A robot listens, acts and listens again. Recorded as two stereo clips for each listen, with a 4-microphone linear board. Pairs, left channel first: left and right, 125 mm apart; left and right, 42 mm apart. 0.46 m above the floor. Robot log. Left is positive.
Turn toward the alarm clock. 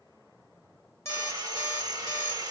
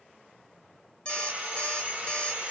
note: The alarm clock: about 20° left or 160° left.
cmd yaw +20
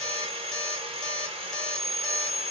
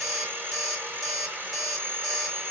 end: Facing the alarm clock.